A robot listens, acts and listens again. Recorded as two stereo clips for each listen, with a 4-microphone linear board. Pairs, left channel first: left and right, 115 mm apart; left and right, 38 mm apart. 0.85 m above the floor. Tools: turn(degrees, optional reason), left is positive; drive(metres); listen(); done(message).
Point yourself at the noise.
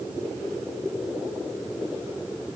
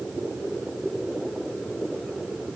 listen()
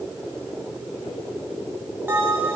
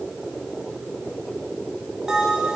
turn(degrees=-20, reason="The bell: about 20° right or 160° right.")
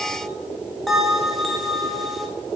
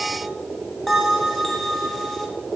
done("Facing the bell.")